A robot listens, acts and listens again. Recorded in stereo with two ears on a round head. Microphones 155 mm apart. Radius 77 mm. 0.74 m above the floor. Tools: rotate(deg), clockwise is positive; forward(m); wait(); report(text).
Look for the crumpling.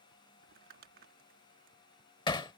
rotate(55)
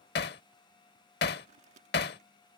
rotate(50)
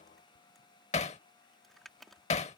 report("Facing the crumpling.")